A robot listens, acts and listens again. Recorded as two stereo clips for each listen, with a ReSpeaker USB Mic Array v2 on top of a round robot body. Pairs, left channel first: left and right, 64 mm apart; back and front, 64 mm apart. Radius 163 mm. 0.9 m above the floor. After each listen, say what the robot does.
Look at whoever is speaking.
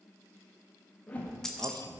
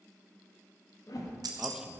Turn 80° right.
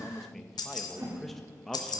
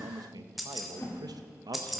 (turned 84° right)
Found it: a man speaking, straight ahead, under 1 m away.